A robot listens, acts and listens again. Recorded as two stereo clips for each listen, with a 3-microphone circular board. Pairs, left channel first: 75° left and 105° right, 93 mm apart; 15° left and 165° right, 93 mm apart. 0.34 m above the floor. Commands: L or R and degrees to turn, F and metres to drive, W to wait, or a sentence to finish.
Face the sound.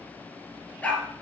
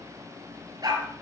L150
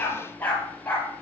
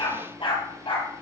Found it: a dog barking, straight ahead.